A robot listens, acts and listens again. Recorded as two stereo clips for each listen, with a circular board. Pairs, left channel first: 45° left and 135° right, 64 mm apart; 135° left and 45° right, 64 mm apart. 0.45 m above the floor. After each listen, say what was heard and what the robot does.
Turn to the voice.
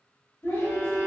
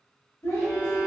The child speaking: 95° left. Turn 95° left.
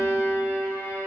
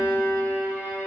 Keep listening.
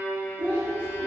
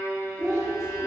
The child speaking is now 15° right. Turn 15° right.
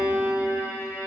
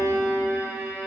Keep listening.
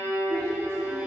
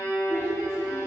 Facing the child speaking, 1 to 2 m away.